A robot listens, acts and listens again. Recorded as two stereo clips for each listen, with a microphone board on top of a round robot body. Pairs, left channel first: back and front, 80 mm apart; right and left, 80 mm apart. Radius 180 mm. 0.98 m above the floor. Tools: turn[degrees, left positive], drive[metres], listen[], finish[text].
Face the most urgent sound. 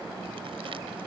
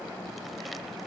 Action: listen[]
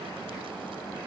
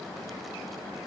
Action: listen[]
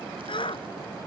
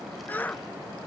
Thought: The shout: 160° right.
Action: turn[-160]
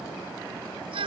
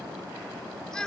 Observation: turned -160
Thought: The shout is now 10° right.
Action: turn[-10]
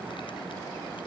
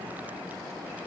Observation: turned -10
Action: listen[]
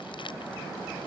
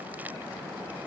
Action: listen[]
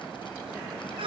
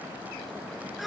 Action: finish[Facing the shout.]